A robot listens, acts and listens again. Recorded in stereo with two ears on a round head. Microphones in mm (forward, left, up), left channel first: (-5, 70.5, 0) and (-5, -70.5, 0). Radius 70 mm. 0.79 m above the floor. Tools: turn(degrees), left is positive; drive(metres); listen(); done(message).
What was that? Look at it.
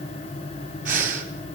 turn(degrees=-55)
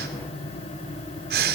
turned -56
turn(degrees=-70)
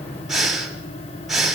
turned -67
done("Found it: breathing, straight ahead.")